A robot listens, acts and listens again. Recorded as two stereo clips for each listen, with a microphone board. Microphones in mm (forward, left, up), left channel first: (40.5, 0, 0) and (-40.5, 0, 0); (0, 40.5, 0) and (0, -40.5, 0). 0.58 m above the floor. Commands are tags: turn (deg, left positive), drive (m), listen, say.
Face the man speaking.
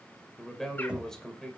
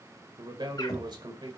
<turn deg="-80"/>
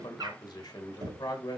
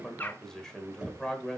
<turn deg="10"/>
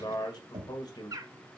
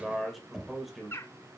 <say>Facing the man speaking.</say>